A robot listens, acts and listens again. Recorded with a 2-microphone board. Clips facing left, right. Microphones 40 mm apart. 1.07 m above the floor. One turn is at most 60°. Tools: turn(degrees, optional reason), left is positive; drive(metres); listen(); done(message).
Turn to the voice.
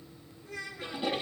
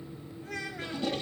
turn(degrees=-60)
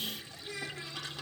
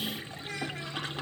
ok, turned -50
turn(degrees=-50, reason="So it is at 50° right.")
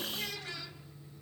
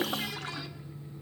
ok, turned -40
turn(degrees=-10, reason="Nothing new. It was at 10° right.")
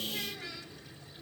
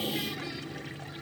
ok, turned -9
listen()
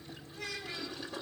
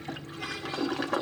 done("I heard a child speaking from this way, but can't make it out now.")